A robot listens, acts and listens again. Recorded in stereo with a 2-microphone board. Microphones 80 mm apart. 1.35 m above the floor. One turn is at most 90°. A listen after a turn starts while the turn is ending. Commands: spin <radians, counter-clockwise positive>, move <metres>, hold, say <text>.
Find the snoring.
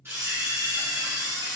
hold
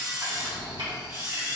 spin -0.96
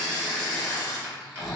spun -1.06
say Facing the snoring, 1 to 2 m away.